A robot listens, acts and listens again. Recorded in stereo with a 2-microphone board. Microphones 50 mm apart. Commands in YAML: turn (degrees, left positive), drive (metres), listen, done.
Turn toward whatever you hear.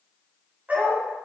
turn: -35
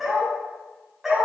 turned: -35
turn: -10
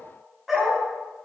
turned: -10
turn: -10
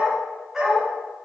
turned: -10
turn: -10
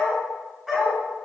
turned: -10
done: "Found it: a dog barking, straight ahead, over 4 m away."